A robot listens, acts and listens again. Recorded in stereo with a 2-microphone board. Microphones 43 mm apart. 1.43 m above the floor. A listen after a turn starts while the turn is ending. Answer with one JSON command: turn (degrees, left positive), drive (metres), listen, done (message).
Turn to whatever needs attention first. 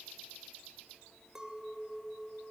{"listen": true}
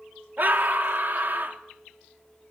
{"turn": -45}
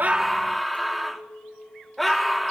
{"done": "Facing the scream, 2 to 4 m away."}